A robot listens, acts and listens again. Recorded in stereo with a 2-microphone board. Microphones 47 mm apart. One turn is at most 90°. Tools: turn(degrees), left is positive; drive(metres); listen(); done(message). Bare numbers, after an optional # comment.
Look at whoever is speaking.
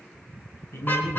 turn(90)
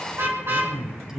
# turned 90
# So it is at 10° right.
turn(-10)
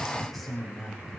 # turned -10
done("Facing the man speaking.")